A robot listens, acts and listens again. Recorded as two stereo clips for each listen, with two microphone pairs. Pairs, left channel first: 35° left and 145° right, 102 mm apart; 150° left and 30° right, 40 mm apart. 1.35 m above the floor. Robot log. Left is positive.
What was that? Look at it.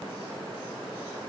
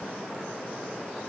cmd idle
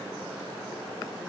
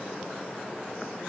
cmd idle
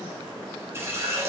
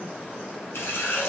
note: The running tap: 150° left.
cmd yaw +150
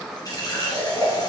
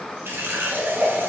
note: The running tap is now 15° right.
cmd yaw -15
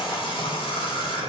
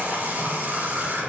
end: Found it: a running tap, straight ahead.